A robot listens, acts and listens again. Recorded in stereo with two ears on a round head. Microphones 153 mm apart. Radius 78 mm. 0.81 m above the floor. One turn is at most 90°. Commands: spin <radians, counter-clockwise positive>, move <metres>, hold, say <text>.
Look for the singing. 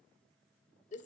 hold
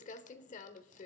hold
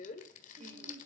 spin -0.70
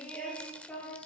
spin 0.17
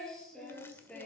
say Facing the singing.